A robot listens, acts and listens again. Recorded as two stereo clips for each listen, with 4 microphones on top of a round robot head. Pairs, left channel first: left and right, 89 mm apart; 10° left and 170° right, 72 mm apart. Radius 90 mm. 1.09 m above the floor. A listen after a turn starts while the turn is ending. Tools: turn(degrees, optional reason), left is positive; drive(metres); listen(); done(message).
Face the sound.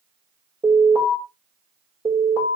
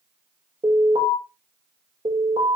turn(degrees=-145, reason="The alarm: 145° right.")
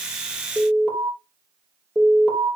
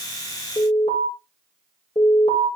done("Found it: an alarm, straight ahead, over 4 m away.")